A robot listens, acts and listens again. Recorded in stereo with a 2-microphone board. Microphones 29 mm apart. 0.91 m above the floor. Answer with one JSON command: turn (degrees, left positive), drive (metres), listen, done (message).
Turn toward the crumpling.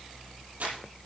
{"turn": -90}
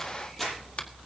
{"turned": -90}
{"turn": 10}
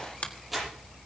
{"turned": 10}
{"done": "Facing the crumpling, over 4 m away."}